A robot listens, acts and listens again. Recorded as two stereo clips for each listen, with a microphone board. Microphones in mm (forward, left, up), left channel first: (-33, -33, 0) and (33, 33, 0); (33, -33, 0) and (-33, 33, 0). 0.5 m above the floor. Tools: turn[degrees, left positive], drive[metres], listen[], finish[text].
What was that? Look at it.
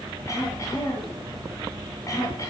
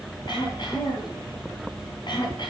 Thought: The throat clearing: 80° right.
Action: turn[-80]
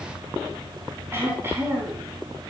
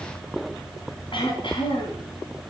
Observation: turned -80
Thought: The throat clearing is now 20° right.
Action: turn[-20]
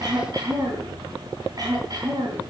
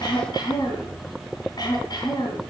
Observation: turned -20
Action: finish[Facing the throat clearing, 2 to 4 m away.]